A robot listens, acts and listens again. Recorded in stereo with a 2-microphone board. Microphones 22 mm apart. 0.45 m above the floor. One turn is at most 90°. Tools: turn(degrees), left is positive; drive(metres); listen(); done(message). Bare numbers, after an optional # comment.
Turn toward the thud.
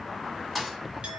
turn(-30)
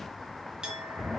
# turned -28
listen()
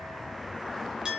done("I heard a thud, but can't make it out now. It was about 15° left or 140° right.")